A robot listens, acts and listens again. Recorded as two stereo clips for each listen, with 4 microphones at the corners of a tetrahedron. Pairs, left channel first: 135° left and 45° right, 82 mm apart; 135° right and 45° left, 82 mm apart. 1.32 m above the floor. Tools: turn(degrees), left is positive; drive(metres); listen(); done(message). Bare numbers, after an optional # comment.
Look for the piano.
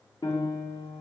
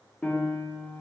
# The piano: 155° left.
turn(155)
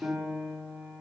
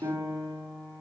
# The piano is now 35° left.
turn(35)
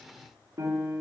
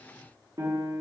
done("Facing the piano, 1 to 2 m away.")